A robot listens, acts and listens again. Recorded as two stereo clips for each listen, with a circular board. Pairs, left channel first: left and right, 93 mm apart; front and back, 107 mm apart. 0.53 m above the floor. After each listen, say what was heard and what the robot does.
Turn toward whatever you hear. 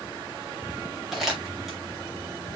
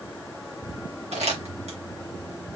The crumpling: 175° right. Turn 175° right.
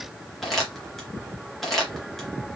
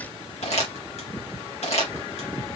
Found it: crumpling, straight ahead, 2 to 4 m away.